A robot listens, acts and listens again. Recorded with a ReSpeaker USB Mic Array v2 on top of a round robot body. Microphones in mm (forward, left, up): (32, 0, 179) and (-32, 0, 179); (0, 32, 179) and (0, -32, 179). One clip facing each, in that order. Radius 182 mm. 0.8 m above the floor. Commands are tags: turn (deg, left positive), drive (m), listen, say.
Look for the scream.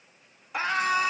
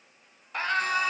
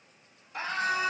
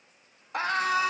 <turn deg="-80"/>
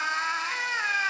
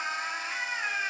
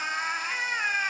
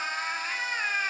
<turn deg="10"/>
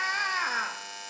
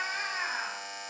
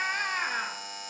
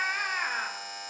<say>Found it: a scream, straight ahead, 1 to 2 m away.</say>